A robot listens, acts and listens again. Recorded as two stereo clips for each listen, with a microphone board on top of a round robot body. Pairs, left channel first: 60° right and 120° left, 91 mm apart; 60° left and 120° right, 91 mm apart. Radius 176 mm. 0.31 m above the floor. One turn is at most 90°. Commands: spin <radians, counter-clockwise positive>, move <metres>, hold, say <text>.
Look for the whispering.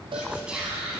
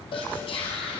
spin 0.70
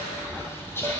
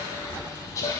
say Facing the whispering.